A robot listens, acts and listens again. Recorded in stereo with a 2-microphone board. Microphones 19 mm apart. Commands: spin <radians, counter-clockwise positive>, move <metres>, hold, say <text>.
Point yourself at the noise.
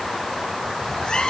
spin 0.87
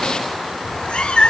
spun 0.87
spin 1.48
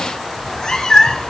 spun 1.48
spin 0.87
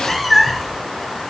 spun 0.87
spin 0.17
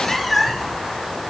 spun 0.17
spin 0.17
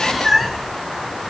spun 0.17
say Found it: a cat meowing, straight ahead, 2 to 4 m away.